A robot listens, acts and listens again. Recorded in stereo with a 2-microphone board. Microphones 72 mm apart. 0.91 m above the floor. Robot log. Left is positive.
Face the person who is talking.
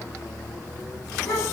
cmd yaw +90
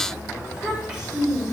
note: So it is at 15° right.
cmd yaw -15
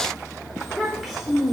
end: Found it: a child speaking, straight ahead.